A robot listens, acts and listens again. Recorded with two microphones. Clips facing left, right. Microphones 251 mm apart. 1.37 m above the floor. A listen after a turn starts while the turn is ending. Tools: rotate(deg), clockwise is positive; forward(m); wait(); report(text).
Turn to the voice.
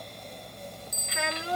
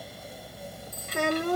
rotate(50)
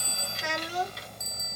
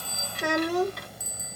rotate(70)
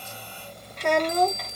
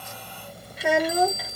report("Found it: a child speaking, straight ahead.")